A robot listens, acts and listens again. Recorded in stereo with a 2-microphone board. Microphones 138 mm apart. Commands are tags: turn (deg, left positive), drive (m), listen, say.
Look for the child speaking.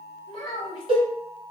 <turn deg="40"/>
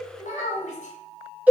<turn deg="95"/>
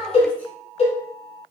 <turn deg="10"/>
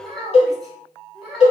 <say>Facing the child speaking.</say>